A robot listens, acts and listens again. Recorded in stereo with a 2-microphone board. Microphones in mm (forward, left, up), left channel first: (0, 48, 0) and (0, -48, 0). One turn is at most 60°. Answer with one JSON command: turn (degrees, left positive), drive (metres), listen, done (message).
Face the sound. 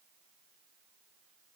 {"listen": true}
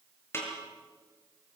{"turn": 25}
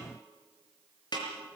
{"turn": 60}
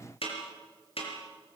{"turn": 60}
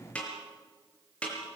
{"turn": 10}
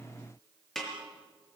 {"done": "Found it: a snare drum, straight ahead."}